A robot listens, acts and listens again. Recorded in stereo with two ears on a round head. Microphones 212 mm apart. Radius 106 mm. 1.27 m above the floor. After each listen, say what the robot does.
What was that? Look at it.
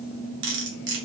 Turn 55° right.
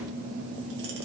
Keep listening.
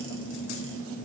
Keep listening.
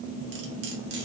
I heard cutlery clinking, but can't make it out now. It was about straight ahead or 70° right.